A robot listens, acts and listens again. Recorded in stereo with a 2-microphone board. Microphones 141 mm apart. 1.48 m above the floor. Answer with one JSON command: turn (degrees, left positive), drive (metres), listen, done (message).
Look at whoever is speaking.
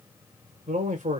{"turn": -60}
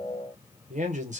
{"turn": -60}
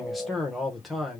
{"done": "Facing the man speaking."}